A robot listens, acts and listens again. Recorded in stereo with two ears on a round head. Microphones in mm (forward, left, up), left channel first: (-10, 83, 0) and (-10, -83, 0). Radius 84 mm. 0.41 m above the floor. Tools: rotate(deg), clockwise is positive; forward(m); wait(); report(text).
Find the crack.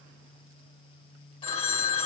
wait()
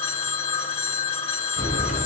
rotate(-40)
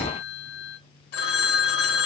wait()
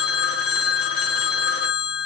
report("I heard a crack, but can't make it out now. It was about straight ahead or 100° left.")